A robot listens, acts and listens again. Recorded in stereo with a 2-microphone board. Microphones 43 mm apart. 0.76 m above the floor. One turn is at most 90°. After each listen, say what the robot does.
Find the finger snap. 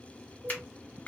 Turn 40° left.
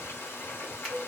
Keep listening.
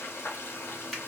Keep listening.
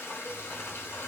I heard a finger snap, but can't make it out now. It was about straight ahead or 100° left.